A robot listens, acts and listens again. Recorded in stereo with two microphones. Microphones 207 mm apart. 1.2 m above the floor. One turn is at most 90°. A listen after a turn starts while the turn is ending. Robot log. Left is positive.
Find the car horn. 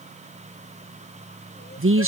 cmd idle
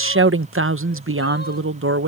cmd idle
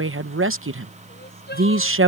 end: I can't make out a car horn to turn to.